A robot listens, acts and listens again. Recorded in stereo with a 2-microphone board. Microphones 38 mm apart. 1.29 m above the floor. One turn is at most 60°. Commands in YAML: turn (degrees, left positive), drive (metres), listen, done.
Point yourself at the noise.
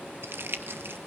turn: -60
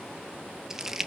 turn: -10
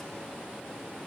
listen: true
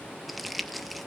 done: "Found it: crumpling, straight ahead, 1 to 2 m away."